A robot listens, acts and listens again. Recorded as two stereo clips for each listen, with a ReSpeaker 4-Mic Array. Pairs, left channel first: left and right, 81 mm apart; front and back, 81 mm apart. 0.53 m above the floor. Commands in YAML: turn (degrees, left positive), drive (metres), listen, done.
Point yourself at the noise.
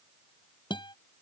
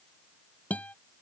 turn: 75
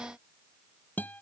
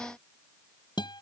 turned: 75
turn: 20
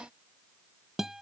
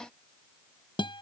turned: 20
done: "Facing the guitar."